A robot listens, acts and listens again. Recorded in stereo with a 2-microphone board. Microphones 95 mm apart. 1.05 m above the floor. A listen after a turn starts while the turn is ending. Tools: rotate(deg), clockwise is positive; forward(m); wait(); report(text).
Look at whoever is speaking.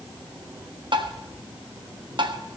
wait()
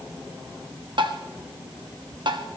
wait()
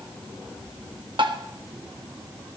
report("I can't make out anyone speaking, only tapping.")